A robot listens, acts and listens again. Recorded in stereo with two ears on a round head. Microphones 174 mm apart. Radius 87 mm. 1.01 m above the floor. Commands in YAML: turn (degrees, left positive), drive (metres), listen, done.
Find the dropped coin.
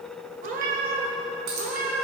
turn: -90
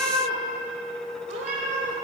done: "Facing where the dropped coin came from. I can't hear it now."